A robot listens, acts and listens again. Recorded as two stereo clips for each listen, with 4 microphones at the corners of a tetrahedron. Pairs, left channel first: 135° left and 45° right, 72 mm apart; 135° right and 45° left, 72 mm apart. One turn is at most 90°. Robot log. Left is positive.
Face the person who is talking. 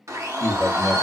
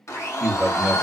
note: The man speaking: 145° left.
cmd yaw +90
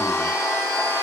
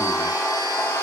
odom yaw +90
note: Nothing new. It was at 55° left.
cmd yaw +55
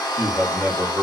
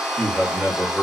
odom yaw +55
end: Found it: a man speaking, straight ahead, 1 to 2 m away.